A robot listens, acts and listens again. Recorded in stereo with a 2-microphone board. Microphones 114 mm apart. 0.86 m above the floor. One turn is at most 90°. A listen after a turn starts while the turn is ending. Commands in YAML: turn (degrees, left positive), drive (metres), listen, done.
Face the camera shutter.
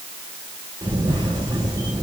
turn: -40
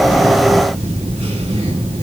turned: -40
turn: -90
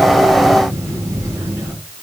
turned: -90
turn: -25
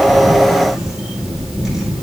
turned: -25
done: "Found it: a camera shutter, straight ahead, 2 to 4 m away."